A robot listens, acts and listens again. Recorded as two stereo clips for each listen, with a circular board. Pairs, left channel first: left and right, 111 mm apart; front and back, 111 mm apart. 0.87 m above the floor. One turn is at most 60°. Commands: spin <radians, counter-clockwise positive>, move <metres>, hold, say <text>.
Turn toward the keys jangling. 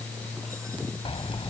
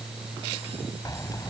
spin 0.96
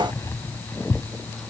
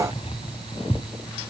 spin 0.44
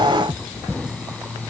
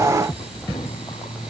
say Found it: keys jangling, straight ahead.